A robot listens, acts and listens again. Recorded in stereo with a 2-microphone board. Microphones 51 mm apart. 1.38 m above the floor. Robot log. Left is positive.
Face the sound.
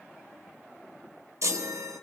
note: The chime: about 75° right or 105° right.
cmd yaw -75
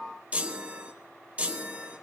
note: So it is at 30° right.
cmd yaw -30
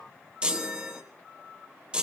note: The chime is now 20° right.
cmd yaw -20
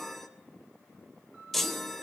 end: Facing the chime.